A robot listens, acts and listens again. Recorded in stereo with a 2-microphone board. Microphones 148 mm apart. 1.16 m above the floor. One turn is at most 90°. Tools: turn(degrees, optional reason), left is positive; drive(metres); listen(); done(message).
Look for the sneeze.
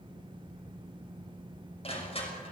listen()
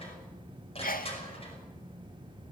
turn(degrees=75, reason="The sneeze: about 75° left or 105° left.")
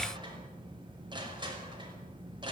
listen()
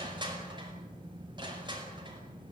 done("I heard a sneeze, but can't make it out now. It was about straight ahead or 30° left.")